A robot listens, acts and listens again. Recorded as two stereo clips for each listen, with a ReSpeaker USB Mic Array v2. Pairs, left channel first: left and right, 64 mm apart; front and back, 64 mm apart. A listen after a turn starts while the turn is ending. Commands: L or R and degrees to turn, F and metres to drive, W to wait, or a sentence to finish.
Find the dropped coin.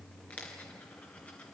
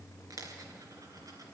L155
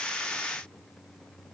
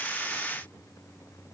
I heard a dropped coin from this way, but can't make it out now.